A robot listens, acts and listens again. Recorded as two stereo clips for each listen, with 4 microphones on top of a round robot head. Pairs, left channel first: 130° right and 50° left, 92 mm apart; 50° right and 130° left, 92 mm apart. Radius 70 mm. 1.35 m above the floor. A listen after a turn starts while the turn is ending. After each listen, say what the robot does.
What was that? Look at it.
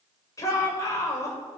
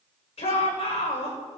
Turn 75° right.
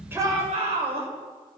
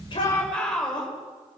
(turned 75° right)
Turn 30° left.
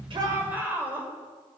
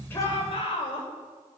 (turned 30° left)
Turn 20° right.
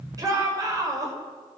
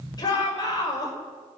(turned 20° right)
Facing the shout, over 4 m away.